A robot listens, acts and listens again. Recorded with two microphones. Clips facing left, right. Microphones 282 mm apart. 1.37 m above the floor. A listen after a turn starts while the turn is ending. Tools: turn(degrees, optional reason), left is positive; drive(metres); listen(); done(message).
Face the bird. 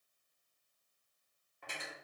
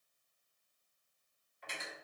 listen()
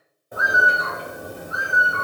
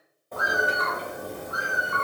turn(degrees=30)
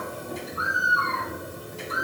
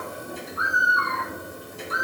turn(degrees=140, reason="So it is at 140° left.")
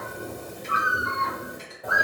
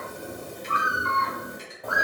done("Found it: a bird, straight ahead.")